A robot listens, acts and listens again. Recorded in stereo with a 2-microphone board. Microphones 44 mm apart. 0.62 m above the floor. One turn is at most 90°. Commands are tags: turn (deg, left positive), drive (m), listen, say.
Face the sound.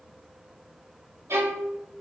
<turn deg="-90"/>
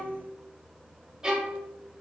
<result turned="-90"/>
<turn deg="-10"/>
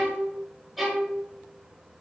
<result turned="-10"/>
<say>Found it: a violin, straight ahead, 1 to 2 m away.</say>